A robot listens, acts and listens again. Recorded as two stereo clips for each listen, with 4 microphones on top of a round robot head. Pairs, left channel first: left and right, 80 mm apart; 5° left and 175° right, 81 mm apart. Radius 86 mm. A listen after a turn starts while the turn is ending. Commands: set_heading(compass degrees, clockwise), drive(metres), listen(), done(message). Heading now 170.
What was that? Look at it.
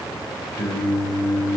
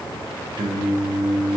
set_heading(10)
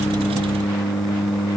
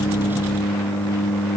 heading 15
done("Found it: singing, straight ahead, 1 to 2 m away.")